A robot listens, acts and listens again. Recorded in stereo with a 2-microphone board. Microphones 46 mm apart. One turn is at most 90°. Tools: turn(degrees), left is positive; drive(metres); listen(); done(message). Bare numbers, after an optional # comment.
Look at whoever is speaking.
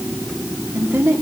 turn(-90)
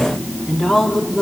done("Found it: a woman speaking, straight ahead.")